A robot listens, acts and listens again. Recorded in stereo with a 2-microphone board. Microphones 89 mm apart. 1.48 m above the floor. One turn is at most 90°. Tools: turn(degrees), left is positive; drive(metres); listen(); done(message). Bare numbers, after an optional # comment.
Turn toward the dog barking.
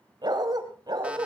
# The dog barking: about 50° right or 130° right.
turn(-50)
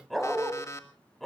done("Facing the dog barking.")